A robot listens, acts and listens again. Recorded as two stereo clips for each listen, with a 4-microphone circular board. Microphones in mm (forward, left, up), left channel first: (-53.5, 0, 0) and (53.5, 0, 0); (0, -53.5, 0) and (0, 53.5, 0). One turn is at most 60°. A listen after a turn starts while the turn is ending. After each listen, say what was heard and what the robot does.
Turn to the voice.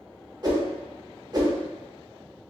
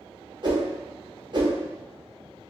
Keep listening.
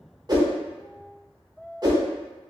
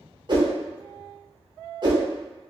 Keep listening.
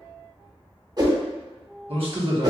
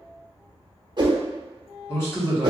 The man speaking: 25° right. Turn 25° right.
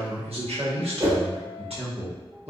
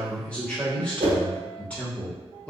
The man speaking is now 10° right. Turn 10° right.
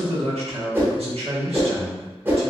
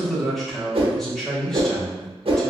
Found it: a man speaking, straight ahead.